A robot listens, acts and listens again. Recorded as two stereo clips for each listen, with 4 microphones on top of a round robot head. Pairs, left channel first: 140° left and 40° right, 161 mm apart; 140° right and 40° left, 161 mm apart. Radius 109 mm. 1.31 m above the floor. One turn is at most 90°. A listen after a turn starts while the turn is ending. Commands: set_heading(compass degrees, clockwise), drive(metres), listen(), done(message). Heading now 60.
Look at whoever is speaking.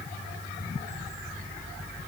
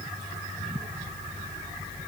listen()
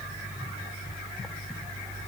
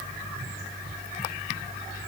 listen()
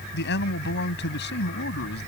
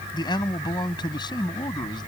set_heading(330)
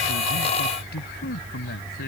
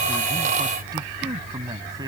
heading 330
set_heading(240)
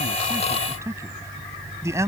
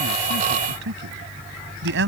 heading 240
set_heading(210)
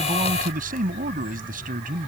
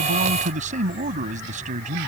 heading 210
done("Found it: a man speaking, straight ahead.")